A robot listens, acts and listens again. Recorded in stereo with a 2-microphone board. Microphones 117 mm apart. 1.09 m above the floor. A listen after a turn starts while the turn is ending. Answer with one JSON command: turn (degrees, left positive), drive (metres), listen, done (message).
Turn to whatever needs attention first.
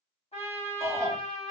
{"turn": -30}
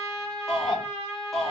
{"done": "Facing the shout, 1 to 2 m away."}